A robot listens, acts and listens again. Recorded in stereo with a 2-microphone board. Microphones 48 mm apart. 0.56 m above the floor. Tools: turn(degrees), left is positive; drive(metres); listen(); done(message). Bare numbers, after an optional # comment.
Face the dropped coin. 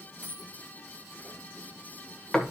# The dropped coin: about 40° right or 140° right.
turn(-40)
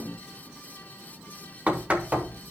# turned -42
listen()
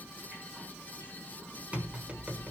done("I heard a dropped coin, but can't make it out now. It was about straight ahead or 100° right.")